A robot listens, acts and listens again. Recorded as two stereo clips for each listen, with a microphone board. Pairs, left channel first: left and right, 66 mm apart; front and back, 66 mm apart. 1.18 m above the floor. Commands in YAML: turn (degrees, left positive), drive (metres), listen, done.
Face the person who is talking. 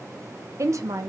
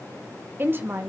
turn: -125
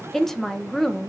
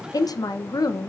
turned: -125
done: "Facing the woman speaking."